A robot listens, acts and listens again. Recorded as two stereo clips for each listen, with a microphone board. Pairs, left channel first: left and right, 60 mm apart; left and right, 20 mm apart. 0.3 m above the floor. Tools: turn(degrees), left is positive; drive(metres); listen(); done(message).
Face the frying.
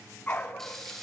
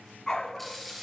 turn(degrees=30)
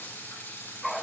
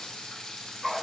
turn(degrees=140)
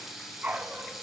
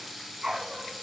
done("Found it: frying, straight ahead.")